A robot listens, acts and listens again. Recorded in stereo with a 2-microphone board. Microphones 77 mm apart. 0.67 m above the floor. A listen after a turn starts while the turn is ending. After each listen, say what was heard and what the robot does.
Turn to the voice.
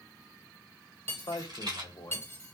The man speaking: about 70° left or 110° left. Turn 70° left.
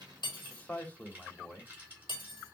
So it is at 20° left. Turn 20° left.
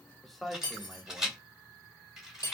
Facing the man speaking.